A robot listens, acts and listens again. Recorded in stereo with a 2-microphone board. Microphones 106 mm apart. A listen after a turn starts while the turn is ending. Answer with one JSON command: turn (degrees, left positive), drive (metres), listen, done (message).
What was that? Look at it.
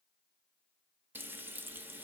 {"turn": -20}
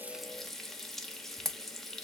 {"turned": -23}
{"done": "Facing the frying."}